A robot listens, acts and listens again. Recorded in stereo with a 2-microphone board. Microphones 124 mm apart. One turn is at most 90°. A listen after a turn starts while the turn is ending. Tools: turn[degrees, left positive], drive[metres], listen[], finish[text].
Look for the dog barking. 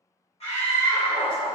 Thought: The dog barking: about 40° left or 140° left.
Action: turn[40]
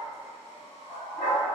Thought: So it is at 125° left.
Action: turn[90]
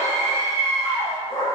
Thought: The dog barking is now 60° left.
Action: turn[60]
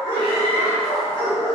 Thought: The dog barking is now 20° left.
Action: turn[20]
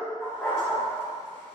Action: finish[Facing the dog barking, 2 to 4 m away.]